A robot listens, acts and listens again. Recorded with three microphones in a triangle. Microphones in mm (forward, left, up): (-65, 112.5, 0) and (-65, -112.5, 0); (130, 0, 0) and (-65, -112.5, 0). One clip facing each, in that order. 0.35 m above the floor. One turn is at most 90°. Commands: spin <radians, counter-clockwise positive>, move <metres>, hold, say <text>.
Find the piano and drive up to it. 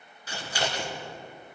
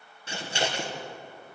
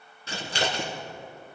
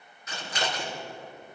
hold
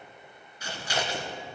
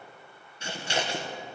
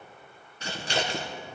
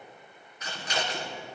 hold
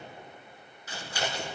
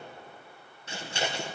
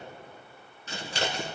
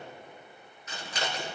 say I can't make out a piano to turn to.